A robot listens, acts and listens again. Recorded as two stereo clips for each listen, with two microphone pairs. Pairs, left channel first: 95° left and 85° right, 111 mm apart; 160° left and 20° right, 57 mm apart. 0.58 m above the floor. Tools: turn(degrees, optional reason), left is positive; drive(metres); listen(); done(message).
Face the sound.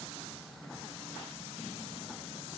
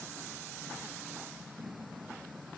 listen()
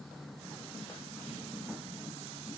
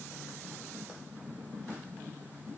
listen()
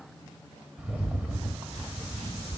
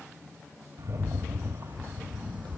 done("Facing the rattle.")